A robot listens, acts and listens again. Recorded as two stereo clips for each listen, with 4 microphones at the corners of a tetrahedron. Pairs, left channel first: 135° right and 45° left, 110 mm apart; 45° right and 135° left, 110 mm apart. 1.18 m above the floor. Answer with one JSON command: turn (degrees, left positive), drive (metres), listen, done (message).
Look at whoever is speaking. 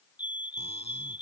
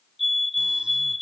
{"listen": true}
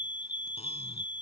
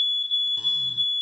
{"listen": true}
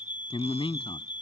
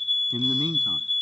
{"turn": -175}
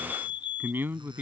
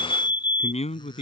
{"turn": -25}
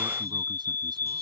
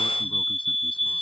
{"listen": true}
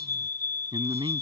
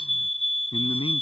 {"done": "Facing the man speaking."}